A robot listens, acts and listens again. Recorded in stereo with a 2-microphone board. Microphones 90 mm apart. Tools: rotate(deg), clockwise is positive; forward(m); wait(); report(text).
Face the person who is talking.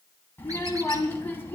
rotate(-25)
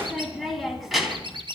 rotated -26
report("Found it: a child speaking, straight ahead.")